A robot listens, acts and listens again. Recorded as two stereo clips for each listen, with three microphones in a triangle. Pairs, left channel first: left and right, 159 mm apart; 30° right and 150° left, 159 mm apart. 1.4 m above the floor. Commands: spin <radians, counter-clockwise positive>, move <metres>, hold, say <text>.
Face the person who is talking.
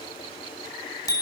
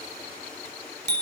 hold
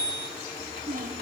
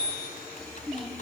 spin -2.09
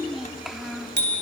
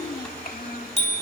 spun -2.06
say Facing the child speaking.